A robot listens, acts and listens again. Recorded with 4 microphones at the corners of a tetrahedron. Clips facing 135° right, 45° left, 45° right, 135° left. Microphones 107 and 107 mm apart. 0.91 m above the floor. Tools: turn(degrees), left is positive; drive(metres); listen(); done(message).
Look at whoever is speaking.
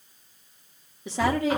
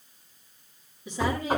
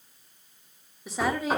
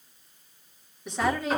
turn(degrees=-130)
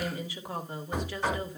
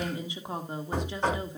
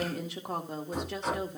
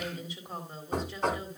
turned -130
turn(degrees=-25)
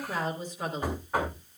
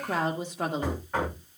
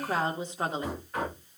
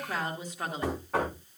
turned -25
turn(degrees=20)
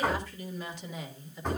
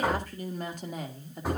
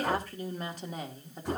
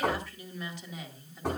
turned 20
done("Facing the woman speaking, 1 to 2 m away.")